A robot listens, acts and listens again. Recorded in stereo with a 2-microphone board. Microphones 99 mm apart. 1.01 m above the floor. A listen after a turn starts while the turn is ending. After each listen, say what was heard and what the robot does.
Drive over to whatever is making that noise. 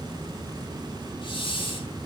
The hiss: about 55° left or 125° left. Turn 55° left.
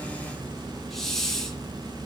Drive 1.0 m forward.
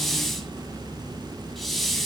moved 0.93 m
Drive 1.0 m forward.
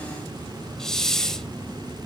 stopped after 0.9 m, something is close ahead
I am next to the hiss.